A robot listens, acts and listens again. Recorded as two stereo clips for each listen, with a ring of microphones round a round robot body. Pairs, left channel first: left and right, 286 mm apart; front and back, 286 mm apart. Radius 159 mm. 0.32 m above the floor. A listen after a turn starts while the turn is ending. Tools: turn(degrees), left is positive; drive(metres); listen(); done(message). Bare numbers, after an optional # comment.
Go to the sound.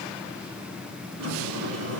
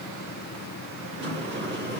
# The sliding door: 130° right.
turn(-130)
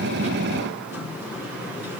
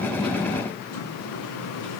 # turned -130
# The sliding door is now 10° right.
turn(-10)
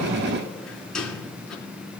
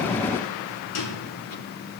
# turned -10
drive(1.0)
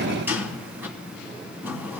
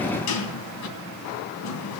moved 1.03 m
drive(1.0)
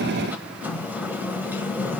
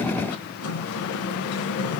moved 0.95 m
drive(1.0)
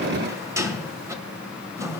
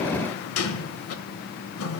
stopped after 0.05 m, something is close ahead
# The sliding door is now 15° right.
turn(-15)
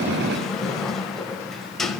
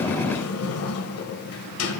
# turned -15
done("Arrived at the sliding door, straight ahead.")